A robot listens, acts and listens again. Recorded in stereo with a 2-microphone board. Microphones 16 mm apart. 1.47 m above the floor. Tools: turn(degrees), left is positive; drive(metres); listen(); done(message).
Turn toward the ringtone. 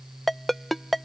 turn(degrees=30)
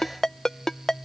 turn(degrees=140)
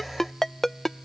turn(degrees=30)
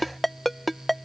turn(degrees=10)
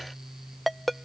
done("Facing the ringtone.")